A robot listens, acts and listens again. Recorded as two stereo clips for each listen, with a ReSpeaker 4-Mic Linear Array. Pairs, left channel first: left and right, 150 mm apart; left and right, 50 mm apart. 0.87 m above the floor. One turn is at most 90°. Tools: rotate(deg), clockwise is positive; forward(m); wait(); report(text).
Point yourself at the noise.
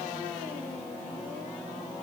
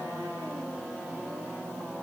wait()
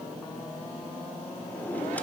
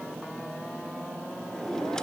rotate(-30)
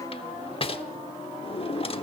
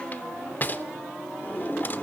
rotate(-90)
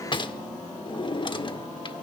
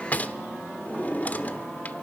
rotate(-35)
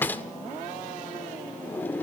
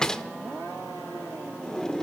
rotate(-15)
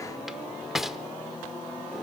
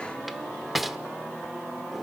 report("Found it: a drawer, straight ahead.")